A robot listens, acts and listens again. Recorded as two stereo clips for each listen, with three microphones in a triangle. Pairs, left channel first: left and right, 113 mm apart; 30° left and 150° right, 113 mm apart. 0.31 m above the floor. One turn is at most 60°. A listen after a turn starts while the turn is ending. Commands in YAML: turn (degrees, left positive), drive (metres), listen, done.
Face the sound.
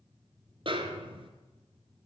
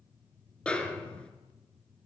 turn: -50
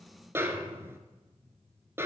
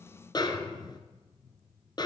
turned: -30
turn: -20
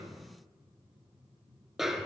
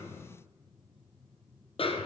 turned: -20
done: "Found it: a snare drum, straight ahead, 1 to 2 m away."